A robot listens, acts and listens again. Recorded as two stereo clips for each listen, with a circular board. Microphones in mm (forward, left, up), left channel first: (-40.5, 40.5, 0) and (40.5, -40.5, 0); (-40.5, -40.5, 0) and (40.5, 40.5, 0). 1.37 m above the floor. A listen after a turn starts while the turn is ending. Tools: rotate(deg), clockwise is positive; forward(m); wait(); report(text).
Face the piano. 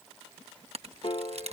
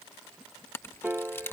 rotate(-120)
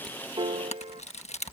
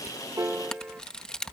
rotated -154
rotate(30)
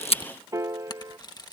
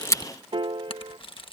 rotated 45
rotate(-15)
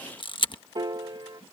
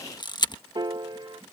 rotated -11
report("Found it: a piano, straight ahead.")